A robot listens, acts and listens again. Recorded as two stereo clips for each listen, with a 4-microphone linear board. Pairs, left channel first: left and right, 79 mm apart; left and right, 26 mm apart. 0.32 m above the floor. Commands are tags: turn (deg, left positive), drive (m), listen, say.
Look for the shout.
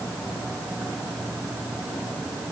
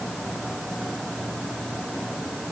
<listen/>
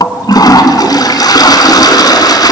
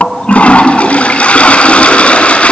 <listen/>
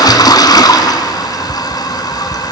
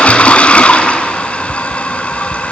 <say>I can't make out a shout to turn to.</say>